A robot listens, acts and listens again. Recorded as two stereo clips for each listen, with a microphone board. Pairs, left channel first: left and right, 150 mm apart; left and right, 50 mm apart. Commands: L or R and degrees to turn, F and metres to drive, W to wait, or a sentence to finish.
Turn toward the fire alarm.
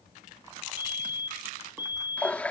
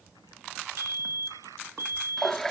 R75
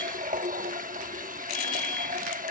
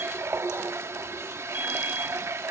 W
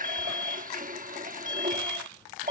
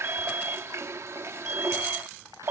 R30
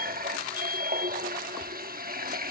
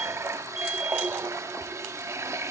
W
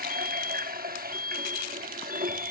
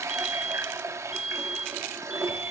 R15
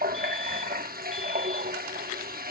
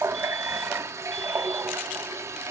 W
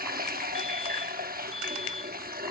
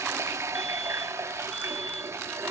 W
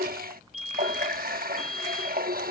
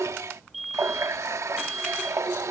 Found it: a fire alarm, straight ahead.